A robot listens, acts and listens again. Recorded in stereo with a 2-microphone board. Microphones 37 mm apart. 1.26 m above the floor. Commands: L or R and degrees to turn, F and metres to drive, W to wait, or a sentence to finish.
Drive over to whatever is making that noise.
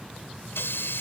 L90
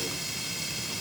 F1.0
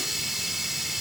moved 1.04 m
F1.0
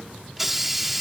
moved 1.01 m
F1.0
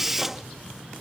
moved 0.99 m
R10
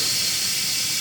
F1.0
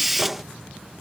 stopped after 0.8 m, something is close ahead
I am next to the hiss.